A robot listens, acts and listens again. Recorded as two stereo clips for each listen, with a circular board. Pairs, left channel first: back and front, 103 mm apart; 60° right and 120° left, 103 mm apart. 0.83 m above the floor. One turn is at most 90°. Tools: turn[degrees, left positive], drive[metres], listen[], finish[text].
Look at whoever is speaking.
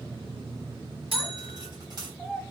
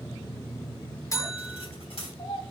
Thought: The child speaking: 90° right.
Action: turn[-90]
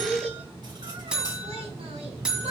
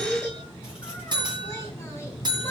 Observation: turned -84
Action: finish[Facing the child speaking.]